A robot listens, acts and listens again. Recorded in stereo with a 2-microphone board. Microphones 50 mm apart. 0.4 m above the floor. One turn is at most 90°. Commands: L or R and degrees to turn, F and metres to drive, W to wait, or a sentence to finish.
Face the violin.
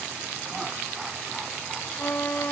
L45
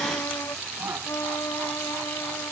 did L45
L90
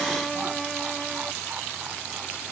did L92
Facing the violin.